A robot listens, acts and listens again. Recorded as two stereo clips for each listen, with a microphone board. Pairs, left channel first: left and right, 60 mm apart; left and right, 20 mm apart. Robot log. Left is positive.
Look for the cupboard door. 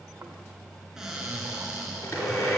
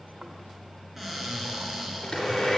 cmd yaw -30
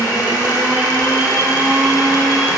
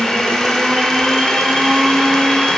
cmd idle
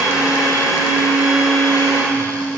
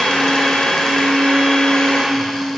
cmd idle
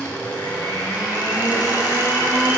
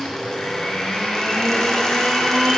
end: I heard a cupboard door, but can't make it out now. It was about 20° left or 140° right.